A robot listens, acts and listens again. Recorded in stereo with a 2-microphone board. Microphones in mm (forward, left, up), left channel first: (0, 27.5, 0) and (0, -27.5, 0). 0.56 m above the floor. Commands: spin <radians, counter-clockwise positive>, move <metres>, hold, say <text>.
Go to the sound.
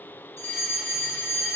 spin 0.87
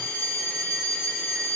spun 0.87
spin 0.44
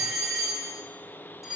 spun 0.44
move 1.0
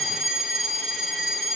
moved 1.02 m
move 1.0
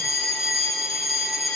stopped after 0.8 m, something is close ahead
say Arrived at the fire alarm, straight ahead.